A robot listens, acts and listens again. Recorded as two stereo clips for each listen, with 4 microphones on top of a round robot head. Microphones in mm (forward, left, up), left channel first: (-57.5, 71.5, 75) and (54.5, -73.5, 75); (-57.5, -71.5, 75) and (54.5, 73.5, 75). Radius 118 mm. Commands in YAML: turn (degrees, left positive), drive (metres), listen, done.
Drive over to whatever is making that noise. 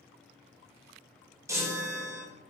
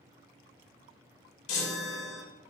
turn: -125
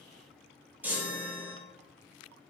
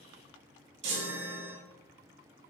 turn: 30
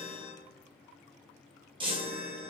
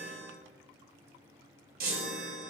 turn: 10
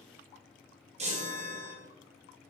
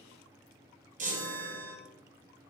drive: 1.0
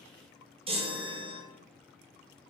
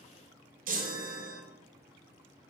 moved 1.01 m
turn: 10
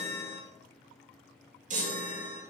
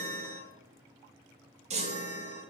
drive: 1.0
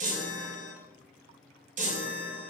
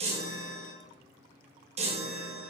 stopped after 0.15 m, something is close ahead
done: "Arrived at the chime, straight ahead."